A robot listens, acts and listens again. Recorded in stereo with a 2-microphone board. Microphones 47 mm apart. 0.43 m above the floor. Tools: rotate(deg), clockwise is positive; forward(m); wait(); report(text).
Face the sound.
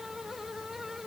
wait()
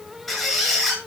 rotate(-30)
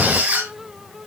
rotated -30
rotate(30)
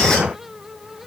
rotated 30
wait()
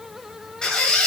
rotate(-15)
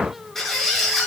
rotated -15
report("Found it: a squeak, straight ahead, over 4 m away.")